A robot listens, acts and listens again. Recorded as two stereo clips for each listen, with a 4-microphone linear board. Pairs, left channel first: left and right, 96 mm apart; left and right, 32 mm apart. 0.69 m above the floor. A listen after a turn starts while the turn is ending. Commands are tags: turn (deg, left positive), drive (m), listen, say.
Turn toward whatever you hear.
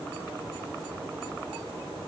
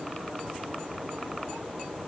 <listen/>
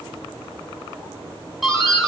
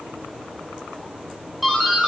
<turn deg="30"/>
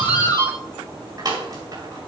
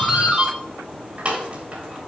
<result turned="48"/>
<turn deg="-50"/>
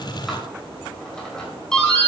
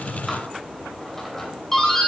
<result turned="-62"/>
<turn deg="10"/>
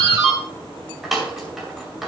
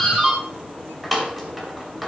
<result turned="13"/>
<say>Found it: a doorbell, straight ahead.</say>